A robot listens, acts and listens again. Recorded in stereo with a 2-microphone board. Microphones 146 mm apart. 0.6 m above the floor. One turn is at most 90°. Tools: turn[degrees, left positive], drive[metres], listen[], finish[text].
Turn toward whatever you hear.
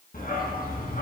Action: turn[90]
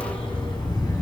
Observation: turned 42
Thought: So it is at 25° left.
Action: turn[25]
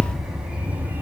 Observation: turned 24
Thought: The dog barking is now 15° right.
Action: turn[-15]
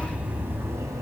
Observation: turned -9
Thought: The dog barking is now 25° right.
Action: turn[-25]
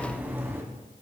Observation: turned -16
Thought: The dog barking is now 15° right.
Action: turn[-15]
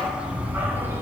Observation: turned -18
Thought: The dog barking is now 15° right.
Action: turn[-15]
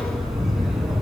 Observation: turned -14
Action: finish[Facing the dog barking.]